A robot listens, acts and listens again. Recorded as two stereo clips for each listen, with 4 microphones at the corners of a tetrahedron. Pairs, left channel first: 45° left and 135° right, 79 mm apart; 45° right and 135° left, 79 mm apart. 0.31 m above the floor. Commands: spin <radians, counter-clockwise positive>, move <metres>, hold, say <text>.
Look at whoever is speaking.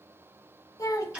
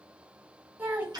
spin 1.31
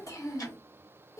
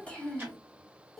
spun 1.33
spin 0.79
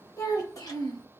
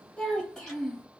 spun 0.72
spin 0.70
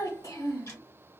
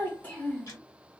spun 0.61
spin 0.35
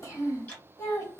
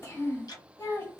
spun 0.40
say Found it: a child speaking, straight ahead, 1 to 2 m away.